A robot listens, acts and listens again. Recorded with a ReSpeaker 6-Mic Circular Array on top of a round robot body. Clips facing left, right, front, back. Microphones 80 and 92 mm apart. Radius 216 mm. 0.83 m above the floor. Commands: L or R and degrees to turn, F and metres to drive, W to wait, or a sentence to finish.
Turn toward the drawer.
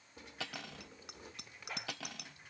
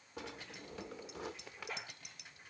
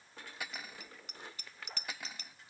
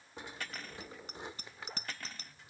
R105
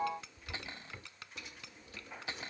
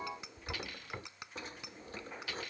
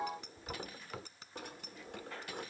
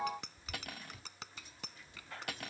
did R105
R35
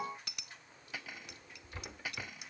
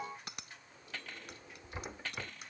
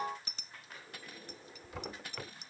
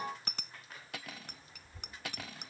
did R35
R15
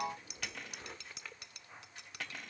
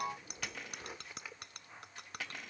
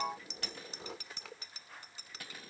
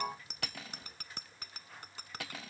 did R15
Found it: a drawer, straight ahead.